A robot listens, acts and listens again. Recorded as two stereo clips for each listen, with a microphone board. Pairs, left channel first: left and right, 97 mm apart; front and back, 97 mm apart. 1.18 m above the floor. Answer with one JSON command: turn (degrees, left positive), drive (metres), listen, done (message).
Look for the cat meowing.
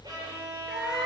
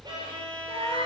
{"turn": -170}
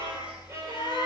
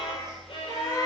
{"turn": -50}
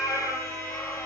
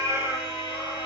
{"done": "Found it: a cat meowing, straight ahead, over 4 m away."}